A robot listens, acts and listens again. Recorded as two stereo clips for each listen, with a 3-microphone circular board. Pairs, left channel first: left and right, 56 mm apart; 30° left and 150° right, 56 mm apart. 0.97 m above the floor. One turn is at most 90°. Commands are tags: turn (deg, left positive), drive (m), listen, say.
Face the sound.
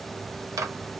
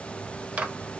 <turn deg="-85"/>
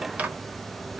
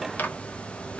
<turn deg="-25"/>
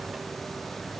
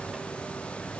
<listen/>
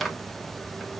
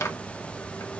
<say>Found it: a microwave, straight ahead.</say>